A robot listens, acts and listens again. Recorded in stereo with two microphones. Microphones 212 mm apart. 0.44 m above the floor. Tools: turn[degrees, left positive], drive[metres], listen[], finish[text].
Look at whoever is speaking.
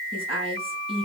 Thought: The woman speaking: about 25° right or 155° right.
Action: turn[-25]
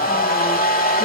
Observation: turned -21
Action: listen[]
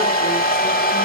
Action: listen[]
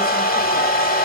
Action: finish[I heard a woman speaking, but can't make it out now. It was about 5° right or 135° right.]